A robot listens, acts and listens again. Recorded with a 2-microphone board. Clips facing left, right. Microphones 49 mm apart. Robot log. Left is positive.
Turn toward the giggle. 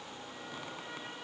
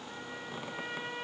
cmd idle
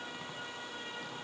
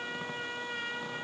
cmd idle
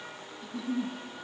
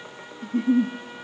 note: The giggle: about 45° right or 135° right.
cmd yaw -45
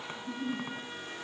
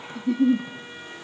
note: So it is at 90° right.
cmd yaw -90
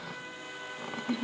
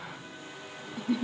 end: Found it: a giggle, straight ahead, under 1 m away.